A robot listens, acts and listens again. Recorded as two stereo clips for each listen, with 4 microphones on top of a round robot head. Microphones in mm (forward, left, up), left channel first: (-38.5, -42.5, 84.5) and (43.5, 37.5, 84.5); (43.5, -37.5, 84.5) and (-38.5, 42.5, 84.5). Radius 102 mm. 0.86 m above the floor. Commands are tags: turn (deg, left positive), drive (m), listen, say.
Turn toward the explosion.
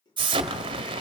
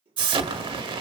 <turn deg="90"/>
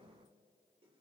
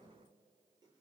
<say>Facing where the explosion came from. I can't hear it now.</say>